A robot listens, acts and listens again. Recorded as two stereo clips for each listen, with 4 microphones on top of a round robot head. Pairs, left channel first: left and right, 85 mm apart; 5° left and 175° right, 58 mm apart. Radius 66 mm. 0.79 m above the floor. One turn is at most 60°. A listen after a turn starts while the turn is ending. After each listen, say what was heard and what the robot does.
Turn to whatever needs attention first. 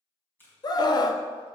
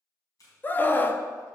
The scream: 55° left. Turn 55° left.
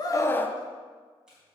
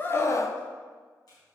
The scream is now 25° left. Turn 25° left.
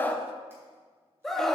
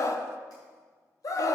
Found it: a scream, straight ahead, 1 to 2 m away.